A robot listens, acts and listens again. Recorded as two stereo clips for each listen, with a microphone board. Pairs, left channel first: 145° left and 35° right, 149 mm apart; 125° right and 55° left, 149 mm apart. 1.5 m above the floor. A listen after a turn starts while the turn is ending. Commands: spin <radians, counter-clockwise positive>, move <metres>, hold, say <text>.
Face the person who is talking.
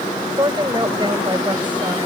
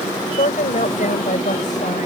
spin -1.57
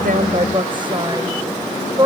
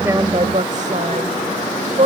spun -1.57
spin 0.44
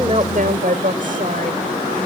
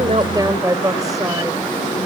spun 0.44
spin -0.17
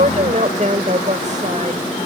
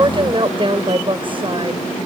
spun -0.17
say Found it: a woman speaking, straight ahead.